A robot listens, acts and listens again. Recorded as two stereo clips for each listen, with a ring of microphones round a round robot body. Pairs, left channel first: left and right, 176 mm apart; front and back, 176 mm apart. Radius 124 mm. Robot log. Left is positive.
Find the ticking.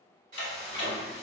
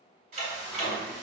note: The ticking: 125° left.
cmd yaw +125
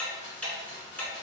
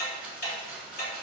note: The ticking is now 10° left.
cmd yaw +10
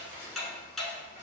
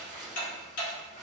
end: Found it: ticking, straight ahead, 1 to 2 m away.